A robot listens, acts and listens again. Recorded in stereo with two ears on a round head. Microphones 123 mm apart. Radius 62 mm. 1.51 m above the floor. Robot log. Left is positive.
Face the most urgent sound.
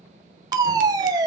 note: The fire alarm: about 30° right or 150° right.
cmd yaw -30
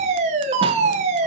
note: So it is at 125° right.
cmd yaw -125
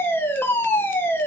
note: The fire alarm is now 15° left.
cmd yaw +15
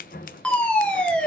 note: The fire alarm is now 10° left.
cmd yaw +10
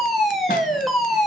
end: Found it: a fire alarm, straight ahead.